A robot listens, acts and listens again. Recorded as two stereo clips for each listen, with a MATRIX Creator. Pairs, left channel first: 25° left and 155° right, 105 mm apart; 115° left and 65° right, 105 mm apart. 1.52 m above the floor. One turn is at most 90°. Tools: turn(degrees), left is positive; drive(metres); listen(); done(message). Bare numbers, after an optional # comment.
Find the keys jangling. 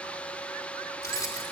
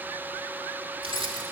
# The keys jangling: 35° right.
turn(-35)
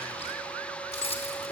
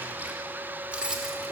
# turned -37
# The keys jangling is now 10° left.
turn(10)
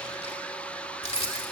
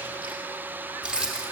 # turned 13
# The keys jangling is now 15° left.
turn(15)
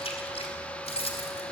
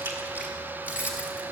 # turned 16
# The keys jangling is now 10° left.
turn(10)
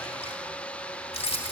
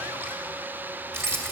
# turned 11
done("Facing the keys jangling.")